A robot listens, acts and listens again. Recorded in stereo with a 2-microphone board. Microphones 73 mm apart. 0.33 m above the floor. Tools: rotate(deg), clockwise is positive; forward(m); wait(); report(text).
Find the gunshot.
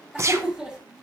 rotate(40)
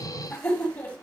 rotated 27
wait()
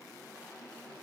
report("I heard a gunshot, but can't make it out now. It was about 15° right or 110° right.")